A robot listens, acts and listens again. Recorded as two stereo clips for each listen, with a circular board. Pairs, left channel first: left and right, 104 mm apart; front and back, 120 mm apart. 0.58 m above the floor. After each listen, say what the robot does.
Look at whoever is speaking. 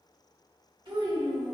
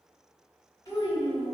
Turn 55° right.
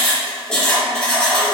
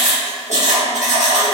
Keep listening.
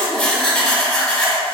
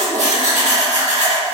Keep listening.
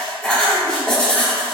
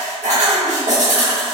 Facing where the child speaking came from. I can't hear it now.